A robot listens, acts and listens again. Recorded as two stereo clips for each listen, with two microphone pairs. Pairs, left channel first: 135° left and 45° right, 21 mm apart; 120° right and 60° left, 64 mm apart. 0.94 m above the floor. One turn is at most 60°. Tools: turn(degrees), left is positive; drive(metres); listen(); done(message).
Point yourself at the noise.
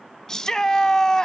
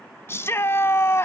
turn(degrees=-60)
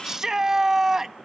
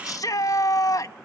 turn(degrees=-60)
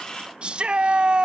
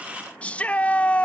turn(degrees=-55)
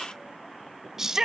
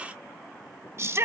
turn(degrees=15)
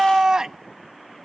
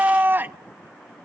done("Facing the shout.")